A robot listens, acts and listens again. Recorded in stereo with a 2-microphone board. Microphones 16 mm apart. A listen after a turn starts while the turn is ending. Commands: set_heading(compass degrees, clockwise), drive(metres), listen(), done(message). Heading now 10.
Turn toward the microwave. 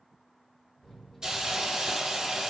set_heading(350)
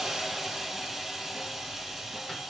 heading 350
listen()
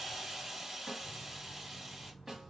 set_heading(340)
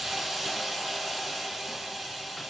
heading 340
listen()
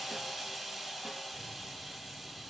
listen()
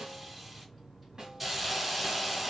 done("Facing the microwave.")